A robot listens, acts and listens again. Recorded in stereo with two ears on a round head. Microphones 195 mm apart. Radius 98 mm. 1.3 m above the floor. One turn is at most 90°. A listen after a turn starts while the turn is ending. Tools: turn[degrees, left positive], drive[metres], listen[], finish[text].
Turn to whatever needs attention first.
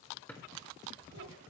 Action: listen[]
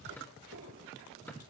Action: listen[]
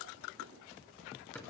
Action: finish[I can't make out anything urgent to turn to.]